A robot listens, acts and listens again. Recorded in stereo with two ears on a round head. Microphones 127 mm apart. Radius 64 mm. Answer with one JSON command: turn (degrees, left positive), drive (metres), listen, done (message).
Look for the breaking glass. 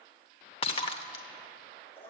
{"turn": 40}
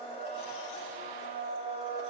{"listen": true}
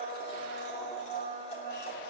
{"done": "I heard breaking glass, but can't make it out now. It was about straight ahead or 100° left."}